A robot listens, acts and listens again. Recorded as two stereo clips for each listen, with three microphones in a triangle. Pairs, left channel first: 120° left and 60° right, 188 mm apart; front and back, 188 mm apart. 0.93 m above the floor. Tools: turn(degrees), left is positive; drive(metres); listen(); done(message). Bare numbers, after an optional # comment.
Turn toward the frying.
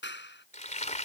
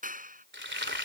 # The frying: 170° left.
turn(170)
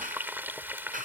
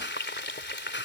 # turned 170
# The frying is now 20° left.
turn(20)
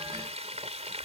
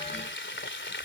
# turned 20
done("Found it: frying, straight ahead.")